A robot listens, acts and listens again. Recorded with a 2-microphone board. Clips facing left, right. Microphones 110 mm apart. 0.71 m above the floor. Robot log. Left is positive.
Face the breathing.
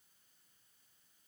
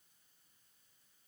cmd idle
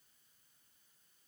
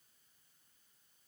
cmd idle
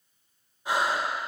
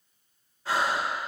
note: The breathing: about 15° left or 165° left.
cmd yaw +15
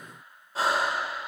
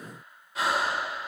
note: So it is at 150° left.
cmd yaw +150
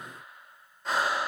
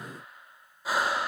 end: Facing the breathing.